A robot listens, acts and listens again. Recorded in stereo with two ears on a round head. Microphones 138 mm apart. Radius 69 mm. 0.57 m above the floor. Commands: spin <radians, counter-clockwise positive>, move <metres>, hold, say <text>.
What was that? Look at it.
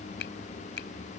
spin 1.57
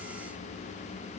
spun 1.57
hold
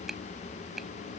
say Found it: a finger snap, straight ahead.